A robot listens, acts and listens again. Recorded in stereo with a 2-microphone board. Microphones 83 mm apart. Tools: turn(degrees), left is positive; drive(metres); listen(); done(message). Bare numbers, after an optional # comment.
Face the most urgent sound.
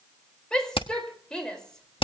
turn(30)
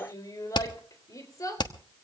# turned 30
# So it is at 140° left.
turn(140)
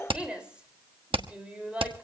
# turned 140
# The shout is now 10° right.
turn(-10)
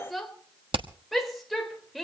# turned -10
done("Facing the shout, over 4 m away.")